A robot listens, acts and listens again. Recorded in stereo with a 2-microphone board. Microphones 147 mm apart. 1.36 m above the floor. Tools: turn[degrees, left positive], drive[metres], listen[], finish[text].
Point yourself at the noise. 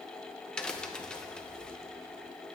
Action: turn[30]
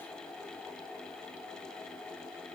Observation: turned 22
Action: listen[]
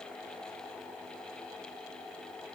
Action: finish[I heard a crack, but can't make it out now. It was about 15° right or 150° left.]